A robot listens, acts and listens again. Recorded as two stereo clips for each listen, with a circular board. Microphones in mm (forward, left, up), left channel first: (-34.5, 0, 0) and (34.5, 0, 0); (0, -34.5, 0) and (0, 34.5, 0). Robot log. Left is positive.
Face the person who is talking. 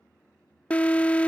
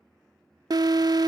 cmd idle
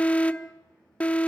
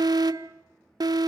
cmd idle
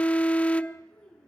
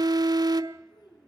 note: The child speaking: 105° right.
cmd yaw -105
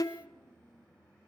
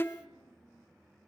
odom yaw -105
cmd idle
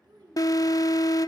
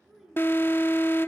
end: Facing the child speaking, over 4 m away.